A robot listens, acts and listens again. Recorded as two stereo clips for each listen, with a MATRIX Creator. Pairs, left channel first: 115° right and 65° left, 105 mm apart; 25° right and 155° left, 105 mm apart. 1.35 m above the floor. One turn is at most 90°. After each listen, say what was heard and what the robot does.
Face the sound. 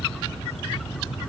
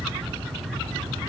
Keep listening.
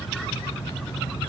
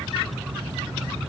Keep listening.
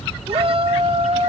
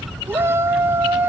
The shout: 90° left. Turn 90° left.
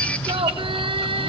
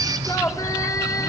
The shout is now 35° left. Turn 35° left.
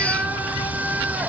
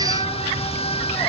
Facing the shout.